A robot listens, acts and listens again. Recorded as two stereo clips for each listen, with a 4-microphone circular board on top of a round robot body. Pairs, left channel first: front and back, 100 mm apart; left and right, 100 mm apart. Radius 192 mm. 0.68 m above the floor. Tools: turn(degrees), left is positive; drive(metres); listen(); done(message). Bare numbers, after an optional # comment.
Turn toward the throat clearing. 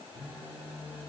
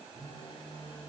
listen()
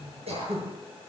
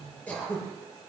# The throat clearing: 165° left.
turn(165)
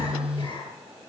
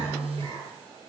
# The throat clearing is now 45° right.
turn(-45)
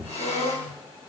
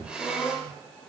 done("Found it: throat clearing, straight ahead.")